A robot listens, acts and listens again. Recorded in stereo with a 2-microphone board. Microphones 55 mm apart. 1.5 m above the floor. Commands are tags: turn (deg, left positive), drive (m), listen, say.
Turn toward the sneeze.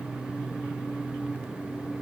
<listen/>
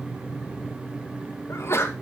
<turn deg="50"/>
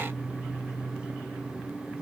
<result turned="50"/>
<listen/>
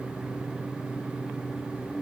<say>I heard a sneeze, but can't make it out now. It was about straight ahead or 80° left.</say>